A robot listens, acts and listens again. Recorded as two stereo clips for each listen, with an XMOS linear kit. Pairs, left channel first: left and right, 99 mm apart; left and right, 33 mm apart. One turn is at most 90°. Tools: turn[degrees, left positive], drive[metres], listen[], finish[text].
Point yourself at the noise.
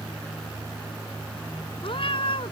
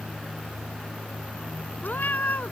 Thought: The cat meowing: about 65° left or 115° left.
Action: turn[65]
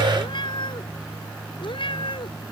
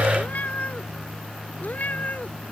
Thought: So it is at 60° left.
Action: turn[60]
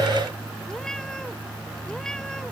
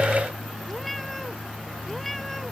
Action: listen[]
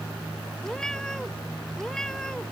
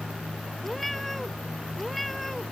Action: listen[]
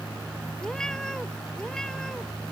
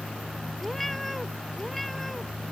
Action: finish[Facing where the cat meowing came from. I can't hear it now.]